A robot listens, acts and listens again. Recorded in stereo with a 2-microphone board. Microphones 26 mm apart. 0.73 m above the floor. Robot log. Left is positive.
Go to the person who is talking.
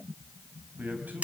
cmd yaw -90
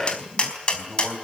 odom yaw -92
cmd fwd 1.0
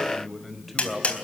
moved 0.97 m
cmd fwd 1.0
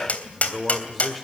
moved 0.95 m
cmd fwd 1.0
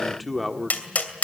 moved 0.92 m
cmd fwd 1.0
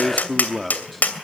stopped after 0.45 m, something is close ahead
end: Arrived at the man speaking, straight ahead.